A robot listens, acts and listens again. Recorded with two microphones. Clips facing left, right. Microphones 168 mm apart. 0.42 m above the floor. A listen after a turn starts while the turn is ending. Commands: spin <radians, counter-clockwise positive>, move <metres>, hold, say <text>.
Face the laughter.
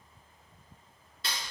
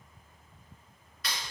hold
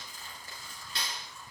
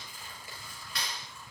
hold
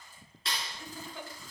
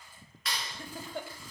spin -0.96
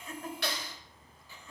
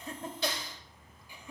spin -0.35
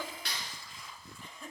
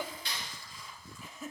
say Facing the laughter.